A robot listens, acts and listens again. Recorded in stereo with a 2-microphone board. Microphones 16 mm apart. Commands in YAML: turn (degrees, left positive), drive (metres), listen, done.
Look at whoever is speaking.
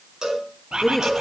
turn: 30
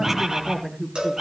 turn: -25
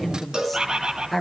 done: "Found it: a woman speaking, straight ahead."